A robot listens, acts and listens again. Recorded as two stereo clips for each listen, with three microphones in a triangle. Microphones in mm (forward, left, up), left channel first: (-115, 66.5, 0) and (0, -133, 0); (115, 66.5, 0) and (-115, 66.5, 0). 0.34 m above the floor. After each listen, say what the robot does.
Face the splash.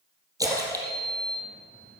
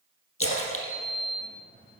Turn 15° left.
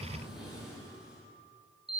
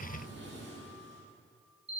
I heard a splash from this way, but can't make it out now.